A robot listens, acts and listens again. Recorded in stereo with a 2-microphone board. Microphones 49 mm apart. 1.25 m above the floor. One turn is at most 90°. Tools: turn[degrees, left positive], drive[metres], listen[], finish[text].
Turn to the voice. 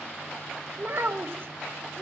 Thought: The child speaking: about 55° right or 125° right.
Action: turn[-55]
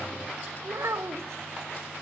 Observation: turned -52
Thought: So it is at 75° right.
Action: turn[-75]
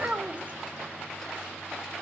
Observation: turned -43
Thought: The child speaking is now 30° right.
Action: turn[-30]
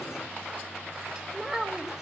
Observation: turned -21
Thought: The child speaking is now 10° right.
Action: turn[-10]
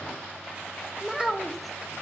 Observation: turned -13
Action: finish[Found it: a child speaking, straight ahead, 1 to 2 m away.]